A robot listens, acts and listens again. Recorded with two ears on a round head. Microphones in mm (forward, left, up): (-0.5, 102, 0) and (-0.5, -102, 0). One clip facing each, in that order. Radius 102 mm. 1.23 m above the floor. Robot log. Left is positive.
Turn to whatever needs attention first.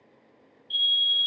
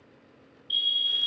note: The fire alarm: about 65° right or 115° right.
cmd yaw -65
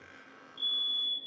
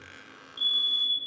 note: So it is at 25° right.
cmd yaw -25
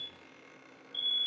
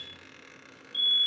note: The fire alarm is now 15° left.
cmd yaw +15
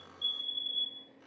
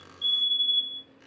end: Facing the fire alarm.